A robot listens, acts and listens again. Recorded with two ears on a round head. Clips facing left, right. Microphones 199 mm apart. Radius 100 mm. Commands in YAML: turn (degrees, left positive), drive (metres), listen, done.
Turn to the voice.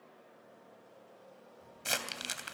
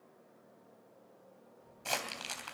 turn: 35
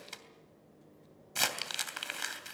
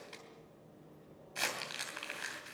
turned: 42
done: "Facing the child speaking, over 4 m away."